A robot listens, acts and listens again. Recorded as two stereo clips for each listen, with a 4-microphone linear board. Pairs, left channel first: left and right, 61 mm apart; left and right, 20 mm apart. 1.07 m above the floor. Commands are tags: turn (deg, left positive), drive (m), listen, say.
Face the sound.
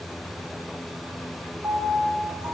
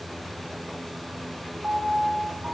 <turn deg="-50"/>
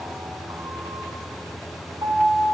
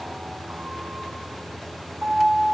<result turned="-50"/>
<turn deg="-80"/>
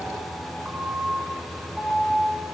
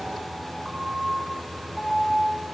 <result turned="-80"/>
<turn deg="-15"/>
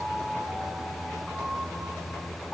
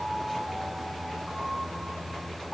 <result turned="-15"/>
<say>Found it: a piano, straight ahead.</say>